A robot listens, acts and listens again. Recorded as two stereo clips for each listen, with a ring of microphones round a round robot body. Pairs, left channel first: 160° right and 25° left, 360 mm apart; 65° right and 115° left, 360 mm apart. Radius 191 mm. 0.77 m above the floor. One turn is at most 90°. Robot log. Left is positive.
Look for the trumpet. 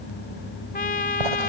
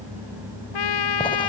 note: The trumpet: 90° right.
cmd yaw -90
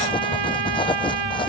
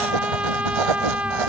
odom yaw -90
note: The trumpet is now 25° left.
cmd yaw +25
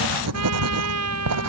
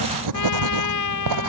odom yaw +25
note: The trumpet is now 25° right.
cmd yaw -25
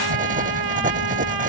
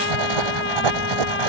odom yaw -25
note: The trumpet is now 10° right.
cmd yaw -10
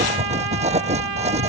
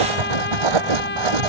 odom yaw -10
end: Found it: a trumpet, straight ahead.